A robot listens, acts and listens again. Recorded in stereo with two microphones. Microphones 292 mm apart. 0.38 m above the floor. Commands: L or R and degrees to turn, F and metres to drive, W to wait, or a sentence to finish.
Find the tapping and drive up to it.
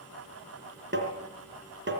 R40
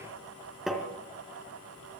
F1.0
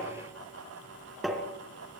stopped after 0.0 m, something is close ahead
Something is in my way. I am facing the tapping but have not reached it.